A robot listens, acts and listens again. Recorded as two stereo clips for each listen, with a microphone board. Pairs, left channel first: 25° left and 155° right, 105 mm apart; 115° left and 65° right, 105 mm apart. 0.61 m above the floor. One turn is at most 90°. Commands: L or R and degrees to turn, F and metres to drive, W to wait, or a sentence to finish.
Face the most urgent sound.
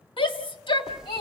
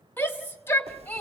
L45
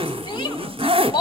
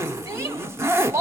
R15
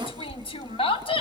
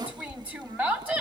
Facing the shout, 1 to 2 m away.